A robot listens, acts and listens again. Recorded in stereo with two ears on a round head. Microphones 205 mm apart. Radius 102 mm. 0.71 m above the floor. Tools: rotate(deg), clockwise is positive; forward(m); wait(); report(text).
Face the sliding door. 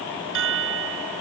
wait()
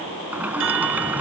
rotate(30)
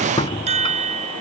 rotate(-25)
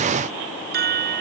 wait()
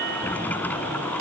rotate(-10)
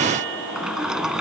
report("Found it: a sliding door, straight ahead.")